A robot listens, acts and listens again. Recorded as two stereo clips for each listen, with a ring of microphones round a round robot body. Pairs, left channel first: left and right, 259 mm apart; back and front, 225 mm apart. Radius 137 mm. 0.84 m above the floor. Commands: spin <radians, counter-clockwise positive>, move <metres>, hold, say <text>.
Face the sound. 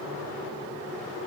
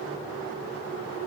hold
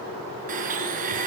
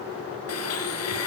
spin -2.62
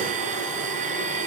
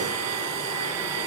spin -0.52
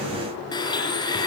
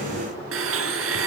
spin 0.26
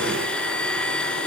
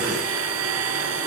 say Facing the blender.